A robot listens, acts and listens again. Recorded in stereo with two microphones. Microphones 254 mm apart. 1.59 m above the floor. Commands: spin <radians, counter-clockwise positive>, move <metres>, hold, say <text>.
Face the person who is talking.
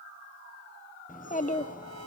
spin 0.52
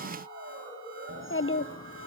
spin 1.92
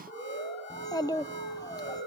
spin 0.26
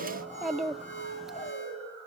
say Found it: a child speaking, straight ahead, under 1 m away.